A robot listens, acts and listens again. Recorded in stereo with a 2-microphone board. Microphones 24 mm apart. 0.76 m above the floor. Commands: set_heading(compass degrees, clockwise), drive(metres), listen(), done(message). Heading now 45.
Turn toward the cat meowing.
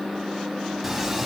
set_heading(15)
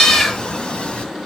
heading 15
set_heading(245)
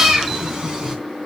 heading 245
set_heading(280)
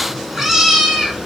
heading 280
set_heading(295)
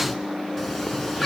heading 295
done("Facing the cat meowing, 2 to 4 m away.")